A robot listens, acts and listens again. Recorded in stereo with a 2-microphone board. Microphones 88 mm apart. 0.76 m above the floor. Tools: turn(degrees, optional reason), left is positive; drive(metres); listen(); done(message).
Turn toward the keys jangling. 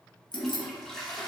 turn(degrees=60, reason="The keys jangling: about 60° left or 120° left.")
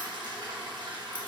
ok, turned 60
listen()
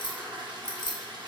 turn(degrees=60, reason="So it is at 60° left.")
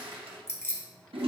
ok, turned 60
turn(degrees=30, reason="The keys jangling is now 30° left.")
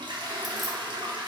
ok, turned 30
listen()
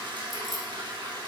listen()
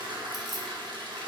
done("Facing where the keys jangling came from. I can't hear it now.")